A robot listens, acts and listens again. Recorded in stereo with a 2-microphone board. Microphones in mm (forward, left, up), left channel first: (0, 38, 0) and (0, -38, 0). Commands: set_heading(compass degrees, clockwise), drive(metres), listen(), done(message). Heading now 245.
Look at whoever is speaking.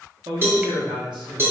set_heading(315)
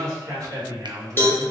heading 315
set_heading(0)
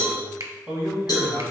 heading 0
done("Found it: a man speaking, straight ahead.")